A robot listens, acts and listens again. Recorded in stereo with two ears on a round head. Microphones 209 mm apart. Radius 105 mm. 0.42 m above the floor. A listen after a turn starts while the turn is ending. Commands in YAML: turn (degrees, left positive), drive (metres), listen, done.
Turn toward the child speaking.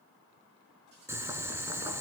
listen: true
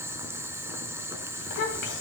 turn: 50
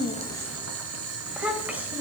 turn: -10
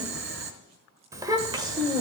turn: -20
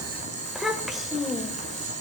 done: "Facing the child speaking."